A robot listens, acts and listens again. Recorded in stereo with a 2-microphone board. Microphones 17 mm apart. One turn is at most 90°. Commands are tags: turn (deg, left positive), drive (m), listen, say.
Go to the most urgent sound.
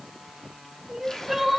<turn deg="-20"/>
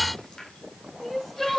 <drive m="1.0"/>
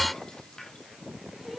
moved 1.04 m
<listen/>
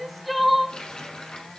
<drive m="1.0"/>
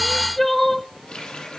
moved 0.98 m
<turn deg="15"/>
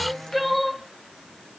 <drive m="1.0"/>
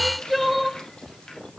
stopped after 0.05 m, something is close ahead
<say>I am next to the crying.</say>